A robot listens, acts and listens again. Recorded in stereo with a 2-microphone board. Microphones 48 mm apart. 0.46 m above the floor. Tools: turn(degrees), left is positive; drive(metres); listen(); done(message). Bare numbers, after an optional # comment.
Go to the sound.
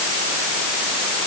listen()
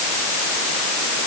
listen()
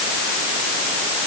done("I can't make out anything to turn to.")